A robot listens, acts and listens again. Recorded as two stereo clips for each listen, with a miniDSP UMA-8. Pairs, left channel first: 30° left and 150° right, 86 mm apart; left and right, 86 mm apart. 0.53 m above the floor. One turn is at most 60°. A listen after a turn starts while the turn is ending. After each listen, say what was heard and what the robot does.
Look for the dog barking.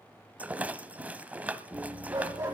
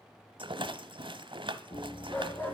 The dog barking: 160° left. Turn 60° left.
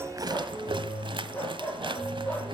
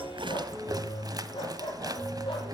The dog barking is now 105° left. Turn 60° left.
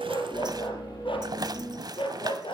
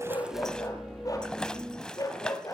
The dog barking is now 45° left. Turn 45° left.
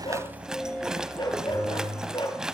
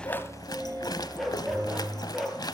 Found it: a dog barking, straight ahead.